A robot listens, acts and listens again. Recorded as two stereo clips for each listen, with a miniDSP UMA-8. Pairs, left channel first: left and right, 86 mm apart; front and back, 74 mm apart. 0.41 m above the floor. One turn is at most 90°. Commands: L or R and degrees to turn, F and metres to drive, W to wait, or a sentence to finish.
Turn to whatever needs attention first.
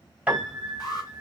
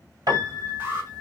L90
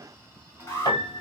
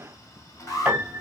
L30
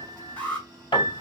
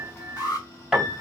L15
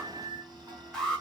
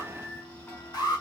Found it: an alarm, straight ahead.